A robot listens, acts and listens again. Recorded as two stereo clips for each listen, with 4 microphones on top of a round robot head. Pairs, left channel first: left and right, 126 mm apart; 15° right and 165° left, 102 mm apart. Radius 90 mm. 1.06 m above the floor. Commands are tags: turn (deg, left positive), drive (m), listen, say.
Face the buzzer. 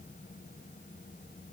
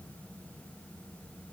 <listen/>
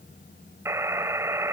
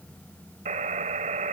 <turn deg="-160"/>
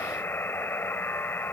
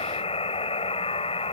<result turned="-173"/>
<turn deg="15"/>
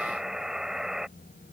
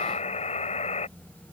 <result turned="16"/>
<say>Facing the buzzer.</say>